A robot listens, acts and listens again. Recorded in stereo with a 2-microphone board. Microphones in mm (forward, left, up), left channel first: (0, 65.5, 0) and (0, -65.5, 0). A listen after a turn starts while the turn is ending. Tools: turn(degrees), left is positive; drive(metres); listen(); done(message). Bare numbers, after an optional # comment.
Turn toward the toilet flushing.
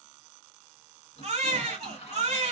# The toilet flushing: about 55° left or 125° left.
turn(55)
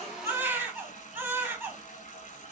# So it is at 70° left.
turn(70)
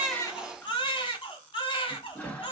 # The toilet flushing is now 10° left.
turn(10)
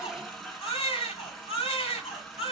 done("Found it: a toilet flushing, straight ahead.")